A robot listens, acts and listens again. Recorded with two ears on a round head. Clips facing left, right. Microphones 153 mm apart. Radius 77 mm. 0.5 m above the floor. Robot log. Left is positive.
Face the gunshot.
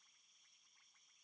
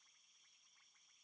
cmd idle
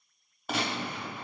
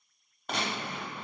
cmd yaw +30
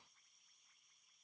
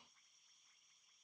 cmd idle
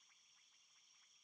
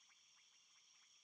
end: I heard a gunshot, but can't make it out now. It was about 25° right or 145° left.